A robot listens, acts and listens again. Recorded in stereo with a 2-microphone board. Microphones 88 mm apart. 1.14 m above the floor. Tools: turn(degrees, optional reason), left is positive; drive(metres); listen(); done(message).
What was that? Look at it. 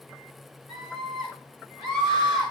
turn(degrees=-30)
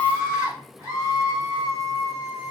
turn(degrees=-145, reason="So it is at 145° right.")
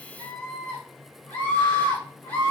turn(degrees=20, reason="The scream is now 20° left.")
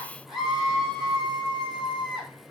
done("Facing the scream.")